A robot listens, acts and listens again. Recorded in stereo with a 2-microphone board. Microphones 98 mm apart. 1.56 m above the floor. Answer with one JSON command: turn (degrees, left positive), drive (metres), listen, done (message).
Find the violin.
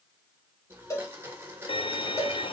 {"turn": 60}
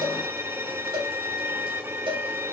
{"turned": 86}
{"turn": -25}
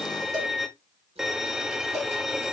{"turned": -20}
{"done": "Found it: a violin, straight ahead."}